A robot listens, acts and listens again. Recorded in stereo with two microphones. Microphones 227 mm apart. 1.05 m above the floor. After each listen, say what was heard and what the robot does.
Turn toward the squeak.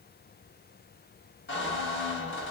The squeak: about 55° left or 125° left. Turn 55° left.
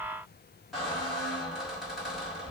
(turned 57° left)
Facing the squeak, 1 to 2 m away.